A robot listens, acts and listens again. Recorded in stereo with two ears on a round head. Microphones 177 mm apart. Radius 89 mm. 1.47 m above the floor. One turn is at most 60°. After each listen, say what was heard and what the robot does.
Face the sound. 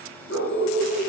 The dog barking: about 65° left or 115° left. Turn 60° left.
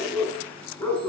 So it is at 10° left. Turn 10° left.
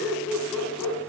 Facing the dog barking, over 4 m away.